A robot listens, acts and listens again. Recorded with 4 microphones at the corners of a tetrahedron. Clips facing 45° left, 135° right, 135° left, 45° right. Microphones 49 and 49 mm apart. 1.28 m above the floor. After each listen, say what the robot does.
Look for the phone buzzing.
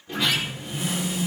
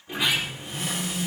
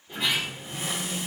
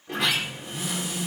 Turn 135° left.
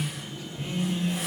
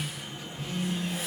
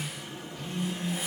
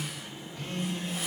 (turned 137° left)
Found it: a phone buzzing, straight ahead, 2 to 4 m away.